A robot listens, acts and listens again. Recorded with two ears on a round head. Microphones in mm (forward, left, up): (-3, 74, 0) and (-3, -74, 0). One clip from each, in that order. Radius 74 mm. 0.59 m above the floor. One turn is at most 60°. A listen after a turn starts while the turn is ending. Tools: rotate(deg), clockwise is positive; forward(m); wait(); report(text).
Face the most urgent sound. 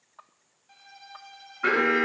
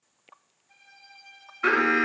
rotate(60)
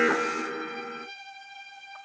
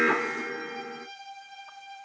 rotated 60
report("Found it: an alarm, straight ahead, 2 to 4 m away.")